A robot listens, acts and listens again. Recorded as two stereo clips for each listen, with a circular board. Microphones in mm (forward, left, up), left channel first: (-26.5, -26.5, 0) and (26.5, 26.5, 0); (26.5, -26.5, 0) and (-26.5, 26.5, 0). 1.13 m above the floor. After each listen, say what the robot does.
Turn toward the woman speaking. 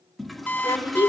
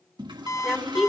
Turn 135° right.
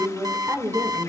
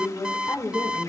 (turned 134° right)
Turn 10° right.
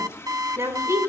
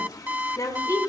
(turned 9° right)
Found it: a woman speaking, straight ahead, over 4 m away.